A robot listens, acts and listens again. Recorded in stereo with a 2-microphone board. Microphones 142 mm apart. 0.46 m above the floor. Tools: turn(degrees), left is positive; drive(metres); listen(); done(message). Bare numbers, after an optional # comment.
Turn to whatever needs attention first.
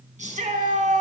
# The shout: about 60° right or 120° right.
turn(-60)
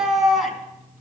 done("Found it: a shout, straight ahead, over 4 m away.")